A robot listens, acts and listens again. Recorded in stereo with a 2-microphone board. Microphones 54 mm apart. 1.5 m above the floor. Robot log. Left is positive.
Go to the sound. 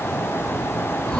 cmd yaw +30
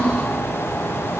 note: So it is at 15° right.
cmd yaw -15
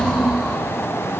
cmd fwd 1.0
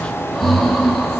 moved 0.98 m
cmd fwd 1.0
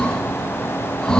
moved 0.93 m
note: The breathing is now 15° left.
cmd yaw +15
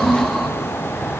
cmd fwd 1.0
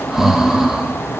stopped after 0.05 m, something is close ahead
end: I am next to the breathing.